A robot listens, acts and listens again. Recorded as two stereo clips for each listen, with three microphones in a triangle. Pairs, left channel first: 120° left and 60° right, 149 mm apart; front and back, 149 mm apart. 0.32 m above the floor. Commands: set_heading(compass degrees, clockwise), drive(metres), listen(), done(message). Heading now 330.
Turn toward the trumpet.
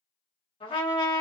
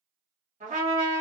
set_heading(170)
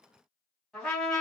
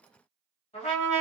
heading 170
set_heading(135)
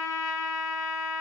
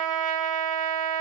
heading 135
set_heading(125)
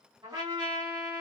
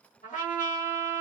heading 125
done("Found it: a trumpet, straight ahead, 1 to 2 m away.")